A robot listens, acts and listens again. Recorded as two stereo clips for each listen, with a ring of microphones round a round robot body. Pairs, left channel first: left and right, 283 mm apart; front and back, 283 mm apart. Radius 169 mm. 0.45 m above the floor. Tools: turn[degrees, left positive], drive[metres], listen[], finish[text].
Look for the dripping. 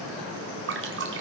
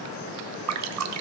Thought: The dripping: 145° right.
Action: turn[-145]
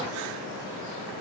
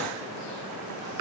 Action: listen[]
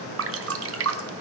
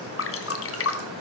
Thought: The dripping is now 45° right.
Action: turn[-45]
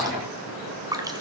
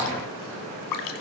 Thought: The dripping is now 10° right.
Action: turn[-10]
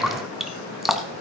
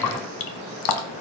Action: finish[Facing the dripping.]